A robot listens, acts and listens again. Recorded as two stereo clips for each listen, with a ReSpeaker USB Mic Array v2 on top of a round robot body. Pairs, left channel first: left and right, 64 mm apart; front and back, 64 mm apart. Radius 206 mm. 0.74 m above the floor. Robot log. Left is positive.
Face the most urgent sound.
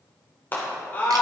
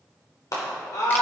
note: The scream: 30° left.
cmd yaw +30
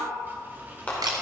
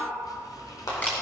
note: The scream is now 25° left.
cmd yaw +25
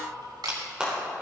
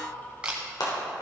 note: The scream is now 15° right.
cmd yaw -15
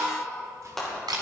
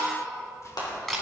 end: Facing the scream, 2 to 4 m away.